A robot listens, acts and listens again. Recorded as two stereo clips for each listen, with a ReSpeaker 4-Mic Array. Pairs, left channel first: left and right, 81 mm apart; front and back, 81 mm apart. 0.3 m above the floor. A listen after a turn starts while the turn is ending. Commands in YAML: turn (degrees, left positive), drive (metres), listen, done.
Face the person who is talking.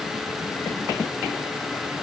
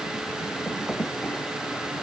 listen: true
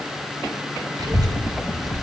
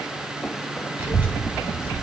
turn: -115
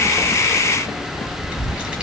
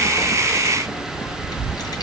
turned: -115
turn: -20
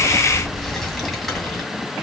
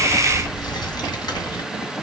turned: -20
done: "Found it: a child speaking, straight ahead, 2 to 4 m away."